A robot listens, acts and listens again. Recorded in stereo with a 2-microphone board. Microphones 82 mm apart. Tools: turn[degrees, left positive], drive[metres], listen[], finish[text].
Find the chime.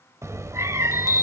Thought: The chime: about 45° left or 135° left.
Action: turn[45]
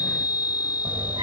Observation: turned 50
Thought: So it is at 80° left.
Action: turn[80]
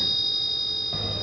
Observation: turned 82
Action: finish[Facing the chime, 1 to 2 m away.]